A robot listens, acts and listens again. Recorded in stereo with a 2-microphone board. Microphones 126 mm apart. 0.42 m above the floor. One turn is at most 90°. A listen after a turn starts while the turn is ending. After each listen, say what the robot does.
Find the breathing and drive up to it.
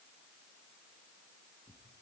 Keep listening.
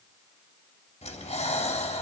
Turn 65° left.
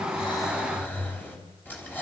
Turn 15° left.
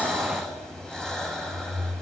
Drive 1.0 m forward.
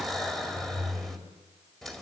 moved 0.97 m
Drive 1.0 m forward.
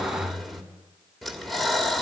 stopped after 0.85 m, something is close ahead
I am next to the breathing.